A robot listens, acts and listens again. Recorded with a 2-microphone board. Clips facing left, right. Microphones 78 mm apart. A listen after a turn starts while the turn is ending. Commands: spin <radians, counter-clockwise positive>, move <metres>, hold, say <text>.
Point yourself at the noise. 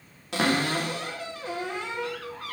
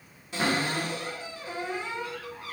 spin 1.57
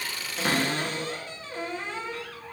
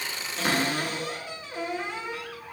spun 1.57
spin -0.17
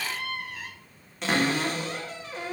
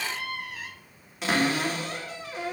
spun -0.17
say Facing the cupboard door, under 1 m away.